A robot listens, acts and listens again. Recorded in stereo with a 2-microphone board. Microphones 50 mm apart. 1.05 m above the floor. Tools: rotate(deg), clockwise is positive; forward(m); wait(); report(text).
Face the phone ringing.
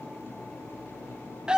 wait()
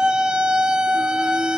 wait()
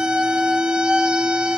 report("I can't make out a phone ringing to turn to.")